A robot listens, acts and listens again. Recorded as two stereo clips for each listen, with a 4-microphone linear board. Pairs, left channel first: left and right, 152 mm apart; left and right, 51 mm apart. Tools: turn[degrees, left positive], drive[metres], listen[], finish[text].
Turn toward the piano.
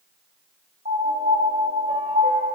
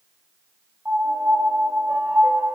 Thought: The piano: about 55° right or 125° right.
Action: turn[-55]
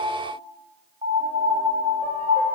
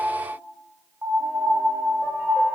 Thought: So it is at 60° right.
Action: turn[-60]
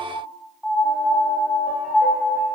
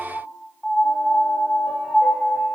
Action: finish[Facing the piano, 1 to 2 m away.]